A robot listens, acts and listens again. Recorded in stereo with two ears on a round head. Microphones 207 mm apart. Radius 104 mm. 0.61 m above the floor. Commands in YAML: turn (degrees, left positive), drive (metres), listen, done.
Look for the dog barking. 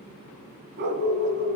turn: -50
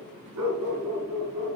turn: -80
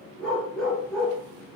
done: "Facing the dog barking, over 4 m away."